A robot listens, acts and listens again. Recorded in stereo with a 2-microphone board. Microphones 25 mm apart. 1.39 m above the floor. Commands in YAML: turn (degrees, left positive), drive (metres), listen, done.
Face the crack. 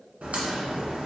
turn: -60
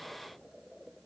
listen: true
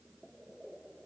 done: "I heard a crack, but can't make it out now. It was about straight ahead or 60° right."